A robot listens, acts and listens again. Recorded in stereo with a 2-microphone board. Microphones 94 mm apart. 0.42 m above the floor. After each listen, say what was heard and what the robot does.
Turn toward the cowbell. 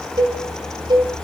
The cowbell: about 50° right or 130° right. Turn 50° right.
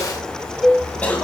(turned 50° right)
Facing the cowbell, 1 to 2 m away.